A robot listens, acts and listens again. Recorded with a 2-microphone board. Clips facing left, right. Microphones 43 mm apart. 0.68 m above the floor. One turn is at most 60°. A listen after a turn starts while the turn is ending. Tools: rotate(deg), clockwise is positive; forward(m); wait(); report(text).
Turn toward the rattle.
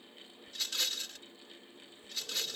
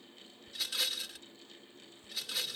rotate(30)
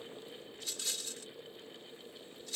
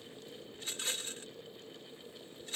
rotate(60)
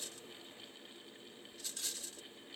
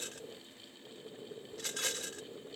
rotate(60)
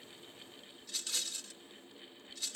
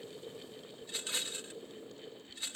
rotate(30)
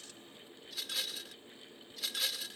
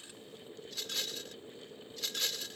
report("Facing the rattle.")